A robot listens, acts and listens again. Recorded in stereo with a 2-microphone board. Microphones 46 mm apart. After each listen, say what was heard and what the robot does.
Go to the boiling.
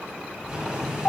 Turn 30° right.
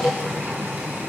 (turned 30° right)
So it is at 135° right. Turn 135° right.
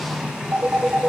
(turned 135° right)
The boiling is now 15° right. Turn 15° right.
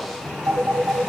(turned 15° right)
Drive 1.0 m forward.
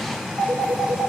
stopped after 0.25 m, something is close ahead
Blocked. The boiling is further on, straight ahead.